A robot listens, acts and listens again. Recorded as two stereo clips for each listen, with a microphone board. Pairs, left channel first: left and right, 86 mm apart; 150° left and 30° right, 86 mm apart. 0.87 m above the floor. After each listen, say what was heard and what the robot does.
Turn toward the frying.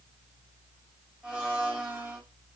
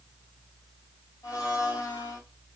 Keep listening.
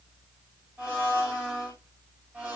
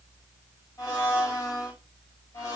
Keep listening.
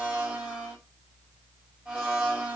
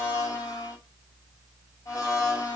I can't make out frying to turn to.